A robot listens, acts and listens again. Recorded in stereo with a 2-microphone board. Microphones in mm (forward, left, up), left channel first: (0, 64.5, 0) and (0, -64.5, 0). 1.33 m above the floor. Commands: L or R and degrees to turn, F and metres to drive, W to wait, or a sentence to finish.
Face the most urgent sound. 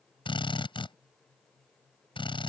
W
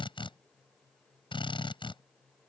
W
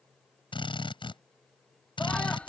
L30
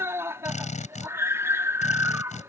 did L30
R20
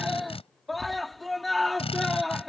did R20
Facing the scream.